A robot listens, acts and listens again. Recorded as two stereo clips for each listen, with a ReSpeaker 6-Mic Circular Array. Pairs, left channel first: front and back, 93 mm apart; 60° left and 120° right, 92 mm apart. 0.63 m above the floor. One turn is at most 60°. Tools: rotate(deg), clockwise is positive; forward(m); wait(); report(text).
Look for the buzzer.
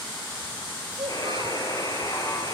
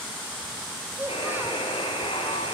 rotate(-50)
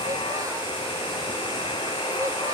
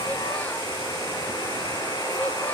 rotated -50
rotate(-10)
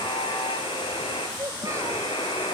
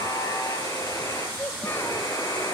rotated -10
report("Found it: a buzzer, straight ahead, over 4 m away.")